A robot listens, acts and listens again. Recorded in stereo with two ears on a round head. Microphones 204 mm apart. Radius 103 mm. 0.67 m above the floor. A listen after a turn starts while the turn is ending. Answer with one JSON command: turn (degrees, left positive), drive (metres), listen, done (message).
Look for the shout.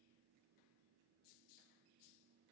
{"listen": true}
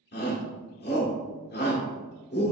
{"turn": 50}
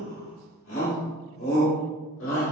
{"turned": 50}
{"turn": 70}
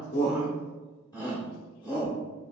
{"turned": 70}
{"turn": 20}
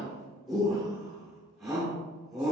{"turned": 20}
{"done": "Facing the shout, 1 to 2 m away."}